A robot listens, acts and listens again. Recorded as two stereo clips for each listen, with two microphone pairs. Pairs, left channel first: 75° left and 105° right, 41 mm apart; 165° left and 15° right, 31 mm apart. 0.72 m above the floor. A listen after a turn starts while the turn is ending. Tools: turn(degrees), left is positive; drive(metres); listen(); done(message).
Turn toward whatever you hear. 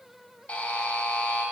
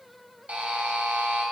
turn(degrees=15)
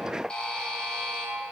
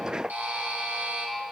done("Facing the buzzer.")